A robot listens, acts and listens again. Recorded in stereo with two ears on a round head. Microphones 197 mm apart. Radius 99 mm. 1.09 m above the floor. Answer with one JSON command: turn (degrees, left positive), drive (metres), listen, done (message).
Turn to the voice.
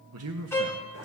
{"turn": -70}
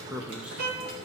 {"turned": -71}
{"done": "Facing the man speaking, under 1 m away."}